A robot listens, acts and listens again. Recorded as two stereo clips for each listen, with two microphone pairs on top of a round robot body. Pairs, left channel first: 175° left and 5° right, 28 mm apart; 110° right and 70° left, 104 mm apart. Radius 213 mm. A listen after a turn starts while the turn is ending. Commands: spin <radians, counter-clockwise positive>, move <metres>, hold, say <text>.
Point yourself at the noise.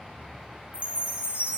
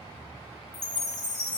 spin -1.05
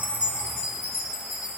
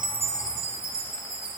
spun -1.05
spin 0.44
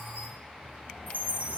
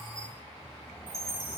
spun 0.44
say Found it: a chime, straight ahead.